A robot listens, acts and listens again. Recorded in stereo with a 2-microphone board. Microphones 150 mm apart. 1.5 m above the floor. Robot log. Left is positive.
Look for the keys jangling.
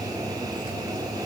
cmd idle
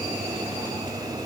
cmd idle
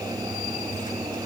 end: I can't make out keys jangling.